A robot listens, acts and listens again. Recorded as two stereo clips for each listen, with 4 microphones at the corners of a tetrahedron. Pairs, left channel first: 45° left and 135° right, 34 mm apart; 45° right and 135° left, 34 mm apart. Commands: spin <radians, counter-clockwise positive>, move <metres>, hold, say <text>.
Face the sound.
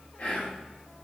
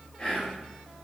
spin 0.26
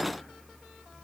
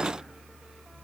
hold
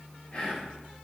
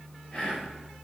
say Facing the whispering, 1 to 2 m away.